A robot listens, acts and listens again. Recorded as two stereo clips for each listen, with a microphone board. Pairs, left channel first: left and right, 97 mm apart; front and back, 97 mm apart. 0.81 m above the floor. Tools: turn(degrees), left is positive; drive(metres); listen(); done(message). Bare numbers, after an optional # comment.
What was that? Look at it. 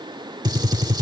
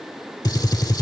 # The gunshot: 45° right.
turn(-45)
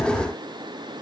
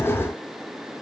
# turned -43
done("Facing where the gunshot came from. I can't hear it now.")